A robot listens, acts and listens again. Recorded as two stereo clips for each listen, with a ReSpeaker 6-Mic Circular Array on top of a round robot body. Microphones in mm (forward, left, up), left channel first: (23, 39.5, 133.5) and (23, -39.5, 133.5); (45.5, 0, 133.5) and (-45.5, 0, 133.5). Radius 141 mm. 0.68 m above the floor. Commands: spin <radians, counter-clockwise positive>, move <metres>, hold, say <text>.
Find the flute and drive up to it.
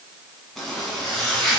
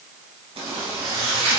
hold
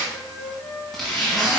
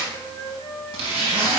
spin 0.79
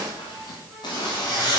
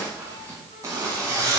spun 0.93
hold
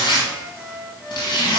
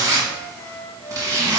move 1.0
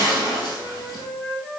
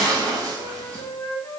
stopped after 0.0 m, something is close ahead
say Something is in my way. I am facing the flute but have not reached it.